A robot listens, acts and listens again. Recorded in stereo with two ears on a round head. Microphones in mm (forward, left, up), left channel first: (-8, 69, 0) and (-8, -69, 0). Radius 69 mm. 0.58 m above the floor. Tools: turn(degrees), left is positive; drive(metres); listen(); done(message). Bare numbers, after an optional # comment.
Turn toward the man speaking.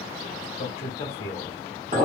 # The man speaking: about 40° left or 140° left.
turn(40)
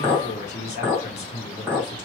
# The man speaking: about 40° left or 140° left.
turn(40)
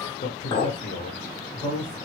# The man speaking: about 50° left or 130° left.
turn(50)
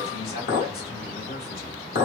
# So it is at 65° left.
turn(65)
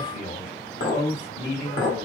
# The man speaking is now 30° left.
turn(30)
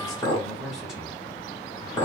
done("Facing the man speaking, 1 to 2 m away.")